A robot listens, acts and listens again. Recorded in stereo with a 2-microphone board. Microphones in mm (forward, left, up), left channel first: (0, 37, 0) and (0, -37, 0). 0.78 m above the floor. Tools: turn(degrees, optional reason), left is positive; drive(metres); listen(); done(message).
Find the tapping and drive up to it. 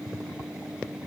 listen()
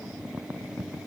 listen()
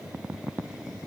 done("I can't make out tapping to turn to.")